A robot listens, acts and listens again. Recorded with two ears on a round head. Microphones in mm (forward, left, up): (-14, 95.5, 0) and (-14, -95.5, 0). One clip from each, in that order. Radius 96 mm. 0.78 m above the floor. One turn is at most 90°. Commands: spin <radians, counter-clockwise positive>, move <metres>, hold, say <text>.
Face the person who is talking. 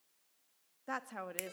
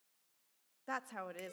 spin -0.52
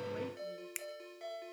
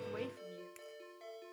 hold
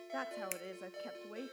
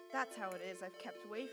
spin -1.57
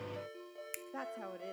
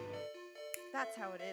spin -1.05
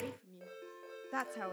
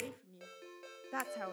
say Facing the woman speaking.